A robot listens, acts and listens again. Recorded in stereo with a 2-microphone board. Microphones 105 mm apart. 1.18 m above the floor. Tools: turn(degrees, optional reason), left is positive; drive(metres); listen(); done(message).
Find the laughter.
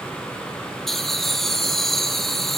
turn(degrees=30)
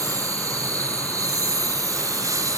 turn(degrees=-30, reason="So it is at 30° right.")
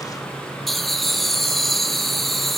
done("Facing the laughter.")